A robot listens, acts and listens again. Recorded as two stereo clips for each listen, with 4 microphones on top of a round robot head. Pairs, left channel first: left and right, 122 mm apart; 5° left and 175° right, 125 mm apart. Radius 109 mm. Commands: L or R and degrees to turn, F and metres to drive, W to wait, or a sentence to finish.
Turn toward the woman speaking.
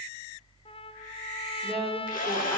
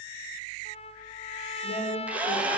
Facing the woman speaking, over 4 m away.